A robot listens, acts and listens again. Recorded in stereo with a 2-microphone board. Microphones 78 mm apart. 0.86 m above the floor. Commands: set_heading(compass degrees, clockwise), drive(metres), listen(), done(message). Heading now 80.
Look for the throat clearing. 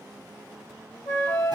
listen()
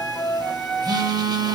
listen()
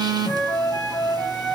done("I can't make out throat clearing, only a flute and a phone buzzing.")